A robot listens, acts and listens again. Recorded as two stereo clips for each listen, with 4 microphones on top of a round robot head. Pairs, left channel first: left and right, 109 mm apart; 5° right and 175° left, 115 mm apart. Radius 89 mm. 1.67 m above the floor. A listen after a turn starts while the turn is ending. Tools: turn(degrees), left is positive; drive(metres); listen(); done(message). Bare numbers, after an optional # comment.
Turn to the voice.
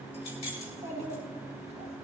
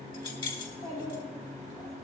# The child speaking: 60° right.
turn(-60)
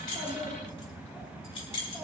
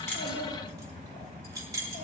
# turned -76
# Nothing new. It was at 15° left.
turn(15)
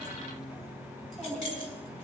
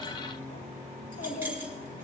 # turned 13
# The child speaking is now 10° right.
turn(-10)
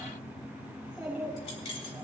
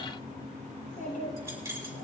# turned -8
done("Facing the child speaking.")